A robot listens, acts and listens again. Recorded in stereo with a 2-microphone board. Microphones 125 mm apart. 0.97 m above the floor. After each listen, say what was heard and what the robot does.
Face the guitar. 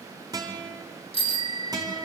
The guitar: about 30° right or 150° right. Turn 30° right.
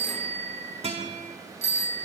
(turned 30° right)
So it is at 120° right. Turn 120° right.
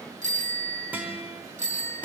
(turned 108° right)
The guitar is now 10° right. Turn 10° right.
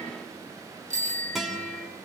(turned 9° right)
Facing the guitar.